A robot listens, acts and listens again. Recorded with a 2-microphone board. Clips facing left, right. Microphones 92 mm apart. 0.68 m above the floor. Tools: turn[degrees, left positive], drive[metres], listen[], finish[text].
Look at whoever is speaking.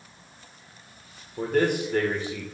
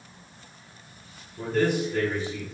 Thought: The man speaking: about 60° left or 120° left.
Action: turn[60]
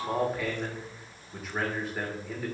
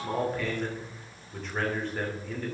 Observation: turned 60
Action: finish[Found it: a man speaking, straight ahead.]